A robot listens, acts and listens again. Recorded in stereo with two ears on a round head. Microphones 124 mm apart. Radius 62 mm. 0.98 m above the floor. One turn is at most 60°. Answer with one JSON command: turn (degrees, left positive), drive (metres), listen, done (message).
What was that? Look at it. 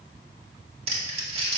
{"turn": -45}
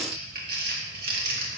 {"turn": -60}
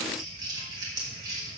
{"turn": -30}
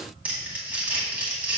{"turn": -10}
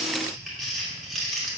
{"done": "Facing the crumpling."}